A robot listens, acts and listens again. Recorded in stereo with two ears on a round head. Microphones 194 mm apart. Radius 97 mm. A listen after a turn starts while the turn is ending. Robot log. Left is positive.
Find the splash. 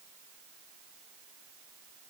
cmd idle
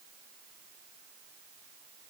cmd idle
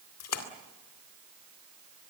cmd yaw +90
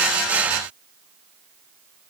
end: I heard a splash from this way, but can't make it out now.